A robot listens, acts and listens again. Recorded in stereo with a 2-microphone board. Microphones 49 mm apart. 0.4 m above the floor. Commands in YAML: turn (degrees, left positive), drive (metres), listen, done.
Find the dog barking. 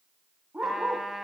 turn: -30
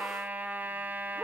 turn: 10
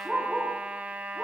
done: "Found it: a dog barking, straight ahead, over 4 m away."